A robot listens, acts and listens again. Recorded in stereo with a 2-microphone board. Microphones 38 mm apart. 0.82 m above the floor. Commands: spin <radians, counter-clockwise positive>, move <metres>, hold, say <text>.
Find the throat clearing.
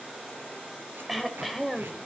spin -0.52
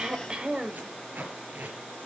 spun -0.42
spin -2.62
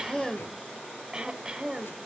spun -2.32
spin -0.35
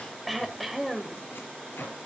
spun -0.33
say Facing the throat clearing, 1 to 2 m away.